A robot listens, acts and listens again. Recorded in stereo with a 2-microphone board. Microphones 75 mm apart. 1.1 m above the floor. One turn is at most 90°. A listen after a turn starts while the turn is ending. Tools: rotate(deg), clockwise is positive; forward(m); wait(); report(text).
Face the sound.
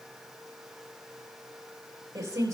rotate(40)
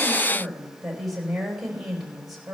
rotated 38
report("Facing the woman speaking.")